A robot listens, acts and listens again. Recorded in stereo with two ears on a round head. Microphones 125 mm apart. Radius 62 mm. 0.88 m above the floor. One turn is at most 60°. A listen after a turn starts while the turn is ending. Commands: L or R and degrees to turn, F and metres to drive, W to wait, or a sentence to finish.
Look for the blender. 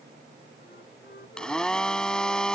L30
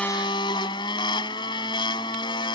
L60
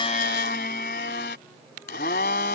L60
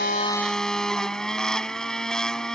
Found it: a blender, straight ahead.